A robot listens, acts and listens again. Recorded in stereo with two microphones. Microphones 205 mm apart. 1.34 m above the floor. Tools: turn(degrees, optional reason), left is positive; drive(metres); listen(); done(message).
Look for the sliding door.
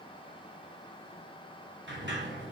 turn(degrees=-65, reason="The sliding door: about 65° right or 115° right.")
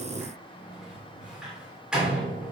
done("Found it: a sliding door, straight ahead.")